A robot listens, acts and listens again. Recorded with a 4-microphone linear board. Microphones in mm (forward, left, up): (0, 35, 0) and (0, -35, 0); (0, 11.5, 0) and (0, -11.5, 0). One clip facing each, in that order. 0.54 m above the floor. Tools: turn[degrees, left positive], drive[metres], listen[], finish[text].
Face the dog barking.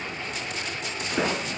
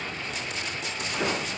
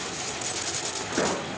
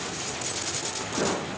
Action: listen[]
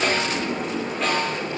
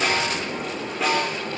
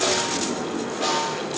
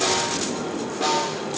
Action: listen[]
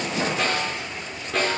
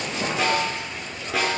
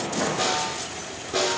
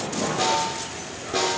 Action: finish[I can't make out a dog barking to turn to.]